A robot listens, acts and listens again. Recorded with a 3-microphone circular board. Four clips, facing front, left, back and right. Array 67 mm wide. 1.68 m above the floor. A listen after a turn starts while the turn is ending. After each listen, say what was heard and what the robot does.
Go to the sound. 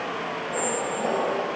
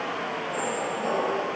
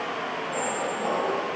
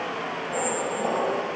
The squeak: 40° right. Turn 40° right.
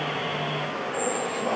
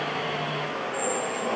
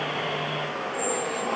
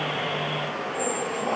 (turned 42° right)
Drive 1.0 m forward.
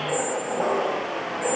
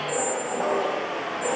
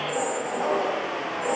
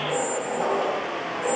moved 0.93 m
Drive 1.0 m forward.
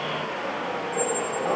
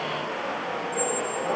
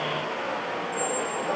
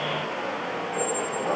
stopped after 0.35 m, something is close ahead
I am next to the squeak.